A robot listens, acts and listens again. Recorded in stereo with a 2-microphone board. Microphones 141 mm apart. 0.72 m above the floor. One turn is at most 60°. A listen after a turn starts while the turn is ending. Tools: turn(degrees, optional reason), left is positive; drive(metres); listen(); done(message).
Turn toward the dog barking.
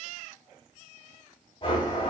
listen()
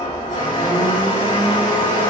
listen()
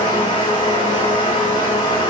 done("I can't make out a dog barking, only a blender.")